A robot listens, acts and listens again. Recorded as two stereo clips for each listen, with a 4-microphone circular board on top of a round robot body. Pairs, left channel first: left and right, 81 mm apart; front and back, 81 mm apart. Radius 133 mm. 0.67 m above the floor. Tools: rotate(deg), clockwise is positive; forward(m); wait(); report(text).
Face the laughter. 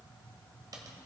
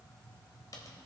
wait()
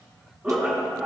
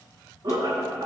rotate(170)
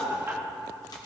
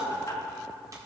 rotate(35)
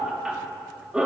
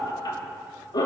rotate(10)
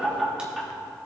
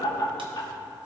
report("Facing the laughter, 2 to 4 m away.")